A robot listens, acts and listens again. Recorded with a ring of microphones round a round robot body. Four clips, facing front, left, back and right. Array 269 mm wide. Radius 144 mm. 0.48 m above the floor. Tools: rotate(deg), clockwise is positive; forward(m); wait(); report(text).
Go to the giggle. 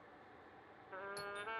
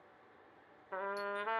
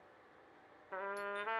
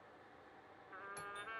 wait()
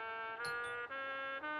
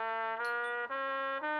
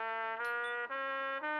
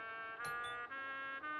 wait()
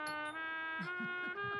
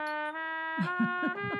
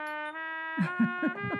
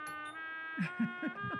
rotate(-165)
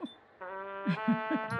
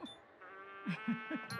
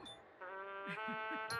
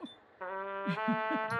forward(1.0)
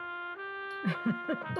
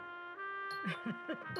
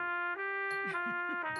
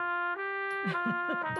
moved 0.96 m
wait()
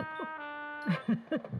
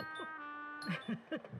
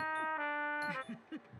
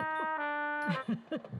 rotate(10)
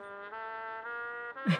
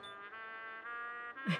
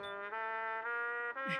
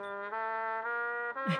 forward(1.0)
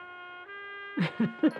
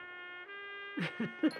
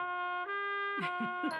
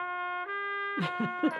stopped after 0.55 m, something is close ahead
rotate(10)
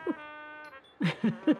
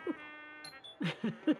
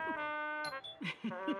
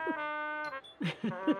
report("I am next to the giggle.")